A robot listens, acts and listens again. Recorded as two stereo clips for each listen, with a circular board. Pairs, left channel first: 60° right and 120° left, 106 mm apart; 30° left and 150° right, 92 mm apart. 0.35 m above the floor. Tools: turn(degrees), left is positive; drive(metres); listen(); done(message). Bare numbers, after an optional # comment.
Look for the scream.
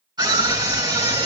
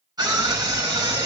# The scream: 165° left.
turn(165)
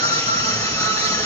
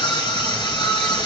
done("Found it: a scream, straight ahead, over 4 m away.")